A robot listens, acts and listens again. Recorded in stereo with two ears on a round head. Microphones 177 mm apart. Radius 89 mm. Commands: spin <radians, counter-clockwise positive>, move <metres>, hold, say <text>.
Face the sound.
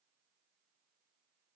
hold
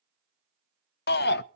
spin 1.05
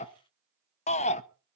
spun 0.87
spin 0.79
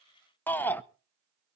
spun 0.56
spin 0.17
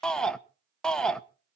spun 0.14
say Found it: a shout, straight ahead.